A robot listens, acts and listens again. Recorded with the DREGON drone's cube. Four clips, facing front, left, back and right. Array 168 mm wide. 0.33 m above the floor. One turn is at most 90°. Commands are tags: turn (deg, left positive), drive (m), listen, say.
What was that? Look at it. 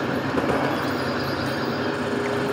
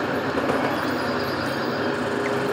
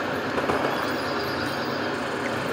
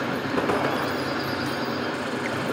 <listen/>
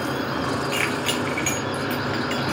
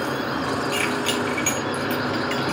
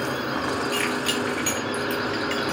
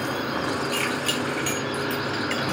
<say>Found it: keys jangling, straight ahead, 2 to 4 m away.</say>